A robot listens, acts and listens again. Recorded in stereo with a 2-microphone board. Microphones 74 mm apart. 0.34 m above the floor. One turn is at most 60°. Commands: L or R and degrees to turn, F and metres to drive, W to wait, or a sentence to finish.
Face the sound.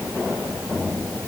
W
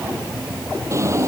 R35
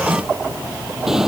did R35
Found it: a drawer, straight ahead.